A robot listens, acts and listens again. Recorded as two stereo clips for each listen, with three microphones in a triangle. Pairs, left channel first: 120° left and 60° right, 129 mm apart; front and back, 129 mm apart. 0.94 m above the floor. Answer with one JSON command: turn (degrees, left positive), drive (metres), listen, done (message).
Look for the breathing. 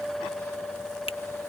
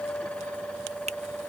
{"listen": true}
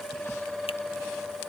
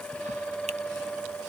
{"listen": true}
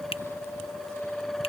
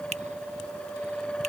{"done": "I can't make out breathing to turn to."}